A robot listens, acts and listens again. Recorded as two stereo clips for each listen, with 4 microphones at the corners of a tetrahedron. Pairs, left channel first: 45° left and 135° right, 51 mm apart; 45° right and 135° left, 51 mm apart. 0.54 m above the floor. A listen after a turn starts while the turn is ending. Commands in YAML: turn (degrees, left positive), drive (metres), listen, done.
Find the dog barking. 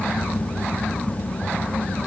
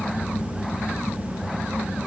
listen: true
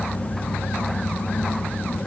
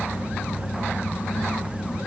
listen: true
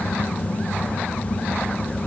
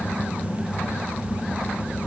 done: "I can't make out a dog barking to turn to."